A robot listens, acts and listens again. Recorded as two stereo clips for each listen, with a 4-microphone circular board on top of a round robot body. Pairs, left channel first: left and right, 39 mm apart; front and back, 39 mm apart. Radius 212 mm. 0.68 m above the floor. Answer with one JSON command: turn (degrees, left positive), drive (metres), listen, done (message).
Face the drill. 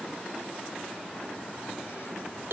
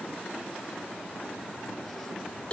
{"listen": true}
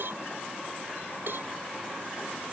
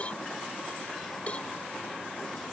{"listen": true}
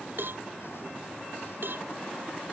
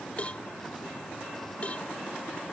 {"done": "I can't make out a drill to turn to."}